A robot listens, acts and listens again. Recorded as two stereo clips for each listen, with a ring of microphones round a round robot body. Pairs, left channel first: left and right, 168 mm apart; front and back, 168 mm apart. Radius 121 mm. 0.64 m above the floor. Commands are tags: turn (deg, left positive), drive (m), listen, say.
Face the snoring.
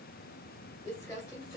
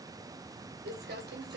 <listen/>
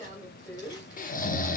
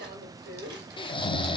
<turn deg="60"/>
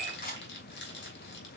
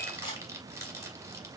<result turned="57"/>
<listen/>
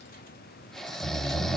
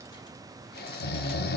<say>Facing the snoring, under 1 m away.</say>